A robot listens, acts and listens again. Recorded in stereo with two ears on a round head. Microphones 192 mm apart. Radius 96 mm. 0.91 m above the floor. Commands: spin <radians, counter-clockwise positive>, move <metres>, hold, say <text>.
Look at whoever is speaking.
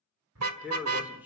spin -0.52
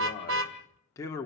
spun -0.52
spin 0.26
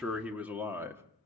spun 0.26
spin -0.17
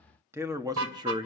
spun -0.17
spin -0.44
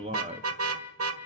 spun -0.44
spin -0.61
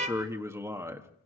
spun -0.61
spin -0.26
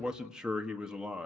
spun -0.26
say Found it: a man speaking, straight ahead.